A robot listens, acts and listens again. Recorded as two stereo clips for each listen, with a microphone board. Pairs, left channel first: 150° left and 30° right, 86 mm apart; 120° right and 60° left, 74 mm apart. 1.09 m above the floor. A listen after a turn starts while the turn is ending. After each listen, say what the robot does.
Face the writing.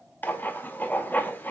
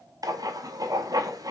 Turn 85° left.
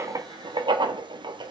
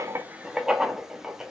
Turn 20° right.
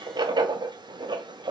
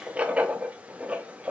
Turn 10° right.
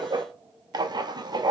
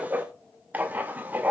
Found it: writing, straight ahead, under 1 m away.